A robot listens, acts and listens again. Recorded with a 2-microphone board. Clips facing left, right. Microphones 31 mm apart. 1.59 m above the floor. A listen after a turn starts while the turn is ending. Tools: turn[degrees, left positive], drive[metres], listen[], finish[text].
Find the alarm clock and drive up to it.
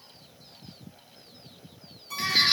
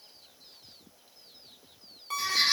Thought: The alarm clock: about 45° right or 135° right.
Action: turn[-45]
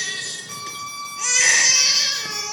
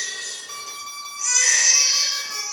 Thought: So it is at 10° right.
Action: turn[-10]
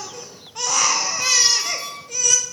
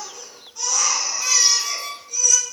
Action: drive[1.0]
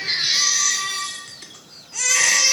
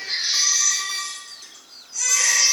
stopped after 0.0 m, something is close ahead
Action: listen[]
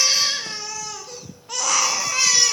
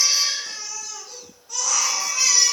Action: listen[]
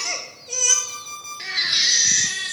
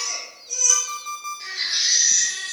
Action: finish[Something is in my way. I am facing the alarm clock but have not reached it.]